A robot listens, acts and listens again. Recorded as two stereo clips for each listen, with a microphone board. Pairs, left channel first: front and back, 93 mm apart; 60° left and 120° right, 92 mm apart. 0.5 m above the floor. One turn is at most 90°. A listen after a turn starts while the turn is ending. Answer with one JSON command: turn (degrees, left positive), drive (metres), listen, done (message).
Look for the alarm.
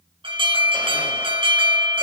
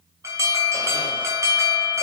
{"turn": 90}
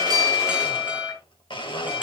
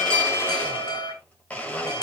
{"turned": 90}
{"turn": 90}
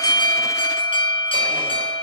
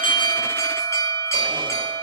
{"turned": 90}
{"done": "Facing the alarm, over 4 m away."}